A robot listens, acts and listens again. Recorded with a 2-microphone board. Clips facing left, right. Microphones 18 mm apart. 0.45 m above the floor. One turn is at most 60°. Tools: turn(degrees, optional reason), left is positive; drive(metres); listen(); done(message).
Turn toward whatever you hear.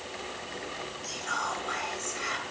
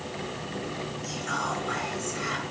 turn(degrees=30)
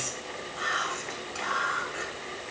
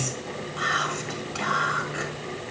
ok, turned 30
turn(degrees=-20, reason="So it is at 20° right.")
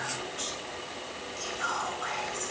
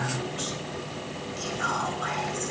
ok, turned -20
done("Found it: whispering, straight ahead, 2 to 4 m away.")